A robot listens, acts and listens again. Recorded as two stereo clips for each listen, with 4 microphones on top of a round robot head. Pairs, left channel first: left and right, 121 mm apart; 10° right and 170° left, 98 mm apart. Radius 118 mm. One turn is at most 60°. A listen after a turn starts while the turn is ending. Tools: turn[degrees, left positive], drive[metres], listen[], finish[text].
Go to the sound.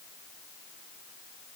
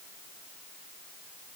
Action: listen[]
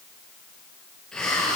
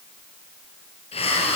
Action: drive[1.0]
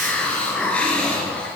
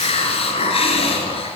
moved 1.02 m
Thought: The hiss is now 10° left.
Action: turn[10]
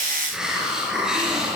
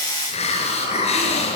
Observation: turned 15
Action: drive[1.0]
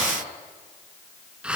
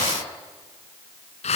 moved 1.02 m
Action: drive[1.0]
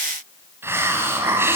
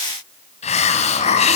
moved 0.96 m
Thought: The hiss is now 15° right.
Action: turn[-15]
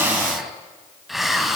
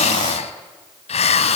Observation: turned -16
Action: drive[1.0]
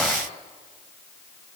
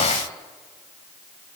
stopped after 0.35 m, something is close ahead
Action: listen[]
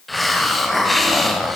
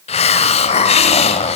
Action: finish[I am next to the hiss.]